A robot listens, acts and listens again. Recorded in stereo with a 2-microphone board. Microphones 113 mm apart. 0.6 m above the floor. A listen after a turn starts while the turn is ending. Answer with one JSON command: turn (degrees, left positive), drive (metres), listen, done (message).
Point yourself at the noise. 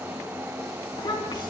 {"turn": 45}
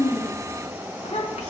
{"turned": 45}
{"turn": 95}
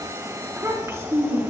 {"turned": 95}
{"turn": -25}
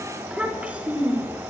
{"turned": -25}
{"turn": -15}
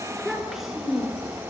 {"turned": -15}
{"done": "Facing the child speaking."}